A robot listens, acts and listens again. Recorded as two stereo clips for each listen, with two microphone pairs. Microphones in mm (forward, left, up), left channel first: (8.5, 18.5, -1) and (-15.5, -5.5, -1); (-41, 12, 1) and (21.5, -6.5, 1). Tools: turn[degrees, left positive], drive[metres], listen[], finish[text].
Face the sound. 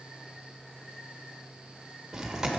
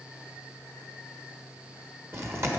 Thought: The chewing: 60° right.
Action: turn[-60]
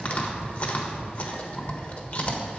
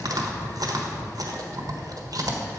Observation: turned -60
Action: finish[Found it: chewing, straight ahead, 1 to 2 m away.]